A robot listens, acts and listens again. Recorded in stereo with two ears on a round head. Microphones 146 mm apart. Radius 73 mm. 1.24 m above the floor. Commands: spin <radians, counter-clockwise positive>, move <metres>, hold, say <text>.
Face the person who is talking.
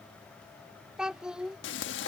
spin -0.52
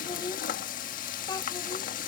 spin 0.44
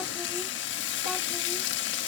hold
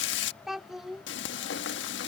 say Facing the child speaking.